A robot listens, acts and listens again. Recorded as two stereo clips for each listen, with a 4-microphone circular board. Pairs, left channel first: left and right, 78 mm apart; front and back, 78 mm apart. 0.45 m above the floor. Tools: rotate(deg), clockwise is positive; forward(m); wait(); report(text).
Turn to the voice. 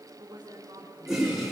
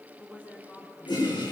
rotate(70)
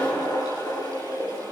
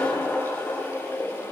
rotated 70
wait()
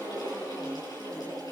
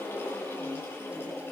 wait()
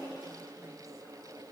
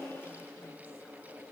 report("Facing where the woman speaking came from. I can't hear it now.")